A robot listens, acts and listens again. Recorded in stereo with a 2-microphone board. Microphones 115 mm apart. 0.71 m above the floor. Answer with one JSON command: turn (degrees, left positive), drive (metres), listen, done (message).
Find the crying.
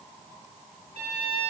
{"listen": true}
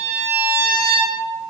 {"listen": true}
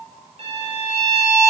{"done": "I can't make out crying, only a violin."}